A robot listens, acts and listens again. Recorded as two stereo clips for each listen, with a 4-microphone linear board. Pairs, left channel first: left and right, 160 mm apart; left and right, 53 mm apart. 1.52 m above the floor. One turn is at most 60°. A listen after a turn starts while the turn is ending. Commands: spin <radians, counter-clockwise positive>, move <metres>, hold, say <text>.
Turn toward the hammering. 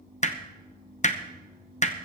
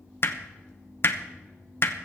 spin 0.87
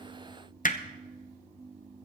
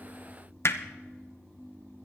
spin 1.05
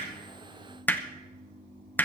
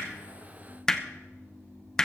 spin 0.26
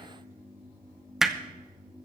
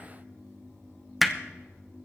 say Found it: hammering, straight ahead.